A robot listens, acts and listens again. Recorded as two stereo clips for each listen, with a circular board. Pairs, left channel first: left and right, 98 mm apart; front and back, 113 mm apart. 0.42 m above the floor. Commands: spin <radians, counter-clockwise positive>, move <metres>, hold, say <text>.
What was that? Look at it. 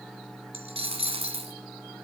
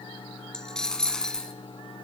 spin -1.48
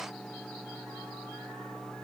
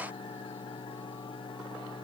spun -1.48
say Facing where the dropped coin came from. I can't hear it now.